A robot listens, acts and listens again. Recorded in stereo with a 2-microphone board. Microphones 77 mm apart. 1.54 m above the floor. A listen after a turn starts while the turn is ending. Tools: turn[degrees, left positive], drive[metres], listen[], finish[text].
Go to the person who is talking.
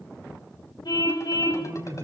Thought: The man speaking: about 45° right or 135° right.
Action: turn[-45]
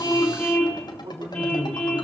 Thought: So it is at 90° right.
Action: turn[-90]
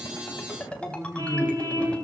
Thought: The man speaking is now 20° right.
Action: turn[-20]
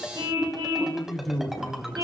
Action: drive[1.0]
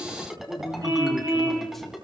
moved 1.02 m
Action: drive[1.0]
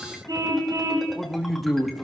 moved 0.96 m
Action: drive[1.0]
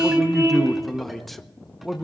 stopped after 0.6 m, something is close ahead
Action: finish[I am next to the man speaking.]